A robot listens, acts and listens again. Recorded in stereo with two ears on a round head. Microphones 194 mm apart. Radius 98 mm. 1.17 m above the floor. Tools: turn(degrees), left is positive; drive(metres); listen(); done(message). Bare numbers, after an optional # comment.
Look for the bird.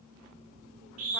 listen()
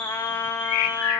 # The bird: about 70° left or 110° left.
turn(70)
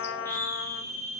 listen()
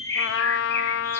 # So it is at 10° left.
turn(10)
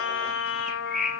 done("Found it: a bird, straight ahead, 2 to 4 m away.")